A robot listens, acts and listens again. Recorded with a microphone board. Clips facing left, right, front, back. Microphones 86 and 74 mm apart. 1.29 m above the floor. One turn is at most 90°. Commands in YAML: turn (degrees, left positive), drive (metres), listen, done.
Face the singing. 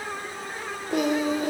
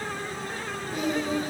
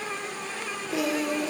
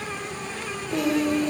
turn: 85
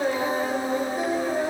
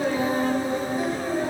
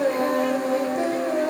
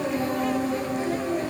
turn: 25
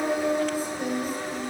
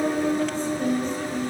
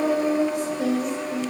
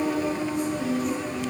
turn: 10
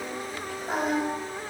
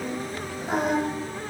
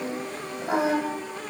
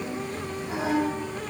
done: "Facing the singing."